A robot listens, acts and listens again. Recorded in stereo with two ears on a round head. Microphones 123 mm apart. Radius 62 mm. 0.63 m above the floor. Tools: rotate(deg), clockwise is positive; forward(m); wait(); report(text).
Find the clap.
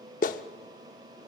rotate(-65)
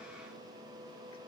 wait()
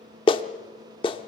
rotate(-40)
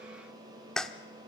report("Facing the clap.")